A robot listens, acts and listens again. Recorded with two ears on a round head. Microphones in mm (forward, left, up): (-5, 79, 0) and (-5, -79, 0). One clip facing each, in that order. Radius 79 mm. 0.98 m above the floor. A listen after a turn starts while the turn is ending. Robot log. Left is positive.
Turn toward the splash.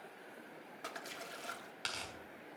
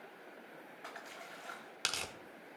note: The splash: about 50° left or 130° left.
cmd yaw +50
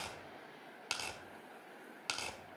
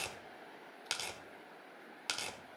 cmd idle
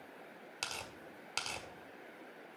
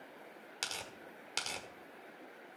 end: I heard a splash, but can't make it out now. It was about straight ahead or 80° left.